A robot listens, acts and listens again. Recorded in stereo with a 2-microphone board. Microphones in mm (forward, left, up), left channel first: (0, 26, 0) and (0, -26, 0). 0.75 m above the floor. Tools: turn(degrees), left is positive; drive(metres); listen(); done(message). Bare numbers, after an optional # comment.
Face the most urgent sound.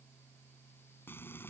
listen()
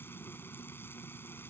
listen()
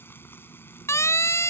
# The siren: about 60° left or 120° left.
turn(60)
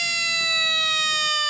done("Found it: a siren, straight ahead.")